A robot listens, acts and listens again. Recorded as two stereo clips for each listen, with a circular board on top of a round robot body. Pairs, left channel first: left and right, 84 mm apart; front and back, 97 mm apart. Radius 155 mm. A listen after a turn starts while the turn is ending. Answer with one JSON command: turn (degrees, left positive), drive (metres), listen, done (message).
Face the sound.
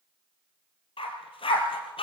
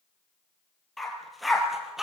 {"turn": 95}
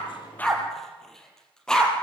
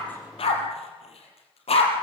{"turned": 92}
{"turn": 10}
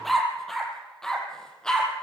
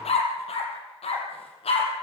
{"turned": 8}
{"turn": 10}
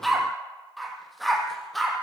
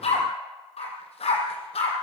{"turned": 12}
{"done": "Found it: a dog barking, straight ahead."}